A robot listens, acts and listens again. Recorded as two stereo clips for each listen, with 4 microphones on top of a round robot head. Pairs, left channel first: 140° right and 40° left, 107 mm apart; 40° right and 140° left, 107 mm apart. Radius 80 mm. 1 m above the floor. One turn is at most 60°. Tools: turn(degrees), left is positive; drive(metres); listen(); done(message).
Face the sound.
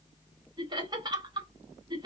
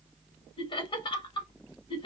done("Found it: laughter, straight ahead, 1 to 2 m away.")